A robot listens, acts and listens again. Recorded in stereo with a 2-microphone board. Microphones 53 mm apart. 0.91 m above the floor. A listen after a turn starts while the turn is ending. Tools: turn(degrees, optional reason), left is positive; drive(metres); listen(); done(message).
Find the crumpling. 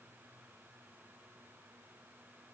listen()
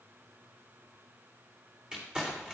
turn(degrees=-15, reason="The crumpling: about 15° right or 165° right.")
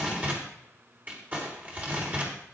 turn(degrees=-150, reason="So it is at 150° right.")
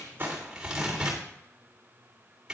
turn(degrees=-15, reason="The crumpling is now 15° right.")
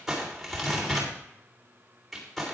done("Facing the crumpling, 2 to 4 m away.")